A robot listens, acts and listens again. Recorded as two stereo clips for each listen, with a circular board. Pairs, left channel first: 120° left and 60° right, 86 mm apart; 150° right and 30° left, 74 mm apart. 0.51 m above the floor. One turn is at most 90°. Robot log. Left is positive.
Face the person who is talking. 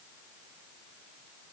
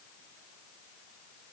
cmd idle
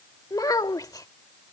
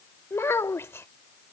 note: The child speaking: 160° left.
cmd yaw +90
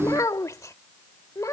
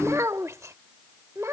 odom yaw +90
note: The child speaking is now 75° left.
cmd yaw +75
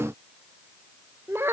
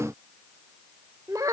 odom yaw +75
end: Facing the child speaking.